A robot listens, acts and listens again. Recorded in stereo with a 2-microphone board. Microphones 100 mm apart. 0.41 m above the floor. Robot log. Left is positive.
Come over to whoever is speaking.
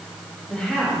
cmd yaw +30
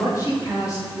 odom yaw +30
note: So it is at 135° left.
cmd yaw +135
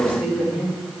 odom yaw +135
note: The woman speaking is now 20° right.
cmd yaw -20
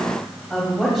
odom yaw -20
cmd fwd 1.0
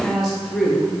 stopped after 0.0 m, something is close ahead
end: Blocked. The woman speaking is further on, straight ahead.